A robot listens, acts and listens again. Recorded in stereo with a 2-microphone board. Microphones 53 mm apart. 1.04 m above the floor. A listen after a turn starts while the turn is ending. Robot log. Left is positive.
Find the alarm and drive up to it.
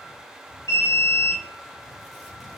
note: The alarm: about 70° left or 110° left.
cmd yaw +70
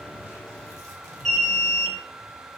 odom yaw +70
cmd fwd 1.0
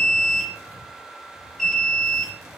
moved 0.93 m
cmd fwd 1.0
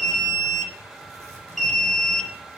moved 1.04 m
cmd fwd 1.0
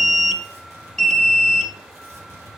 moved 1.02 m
note: The alarm is now 10° left.
cmd yaw +10
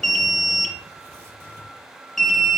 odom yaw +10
cmd fwd 1.0
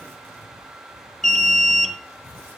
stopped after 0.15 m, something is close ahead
end: I am next to the alarm.